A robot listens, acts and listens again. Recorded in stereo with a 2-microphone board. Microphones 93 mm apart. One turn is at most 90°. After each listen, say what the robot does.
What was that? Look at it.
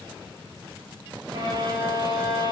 Turn 45° right.
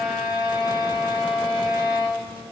Facing the violin, 1 to 2 m away.